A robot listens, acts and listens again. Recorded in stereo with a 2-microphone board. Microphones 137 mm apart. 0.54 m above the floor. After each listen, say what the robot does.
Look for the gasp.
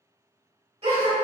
Turn 50° right.
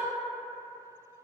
Keep listening.
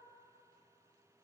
I heard a gasp, but can't make it out now. It was about straight ahead or 80° right.